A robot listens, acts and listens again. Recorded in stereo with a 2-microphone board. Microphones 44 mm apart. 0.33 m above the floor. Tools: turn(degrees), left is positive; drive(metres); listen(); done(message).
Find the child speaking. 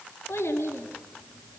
turn(degrees=90)
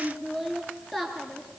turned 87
done("Found it: a child speaking, straight ahead.")